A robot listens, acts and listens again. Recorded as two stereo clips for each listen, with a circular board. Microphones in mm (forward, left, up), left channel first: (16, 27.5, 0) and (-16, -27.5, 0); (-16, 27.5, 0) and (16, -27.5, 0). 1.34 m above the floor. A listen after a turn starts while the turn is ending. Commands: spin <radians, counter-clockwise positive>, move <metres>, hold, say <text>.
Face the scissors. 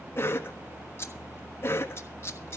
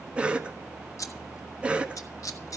spin 1.83
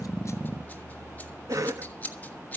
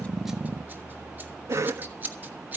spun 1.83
say Facing the scissors, 1 to 2 m away.